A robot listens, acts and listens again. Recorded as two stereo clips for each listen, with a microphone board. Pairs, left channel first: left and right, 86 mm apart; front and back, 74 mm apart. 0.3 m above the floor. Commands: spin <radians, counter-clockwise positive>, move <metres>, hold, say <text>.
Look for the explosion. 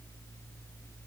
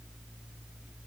hold
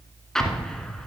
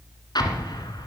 say Facing the explosion.